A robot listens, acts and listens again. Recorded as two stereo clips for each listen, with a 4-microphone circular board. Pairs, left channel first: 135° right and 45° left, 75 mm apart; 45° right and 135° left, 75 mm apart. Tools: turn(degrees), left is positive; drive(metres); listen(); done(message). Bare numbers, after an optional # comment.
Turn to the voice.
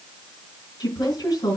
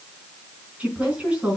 # The woman speaking: 155° right.
turn(-155)
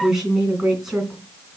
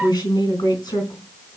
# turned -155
# The woman speaking is now 40° right.
turn(-40)
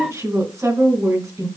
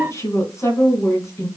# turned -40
done("Facing the woman speaking.")